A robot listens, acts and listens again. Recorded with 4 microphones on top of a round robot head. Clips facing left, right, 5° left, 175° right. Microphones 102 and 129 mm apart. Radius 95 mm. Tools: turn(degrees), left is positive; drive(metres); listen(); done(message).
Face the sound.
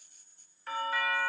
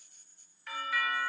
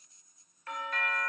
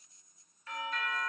turn(degrees=35)
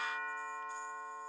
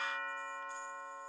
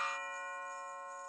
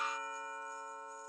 turn(degrees=15)
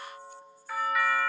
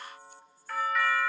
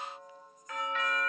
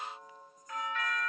done("Found it: a doorbell, straight ahead.")